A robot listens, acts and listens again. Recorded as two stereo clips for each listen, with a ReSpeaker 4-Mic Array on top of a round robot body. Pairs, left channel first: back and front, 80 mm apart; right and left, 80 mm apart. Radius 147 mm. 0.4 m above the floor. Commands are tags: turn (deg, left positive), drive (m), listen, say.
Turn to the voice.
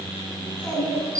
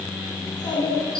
<turn deg="-115"/>
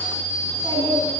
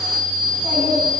<turn deg="-50"/>
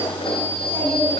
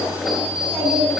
<turn deg="15"/>
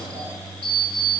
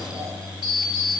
<listen/>
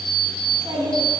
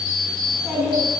<say>Found it: a child speaking, straight ahead, over 4 m away.</say>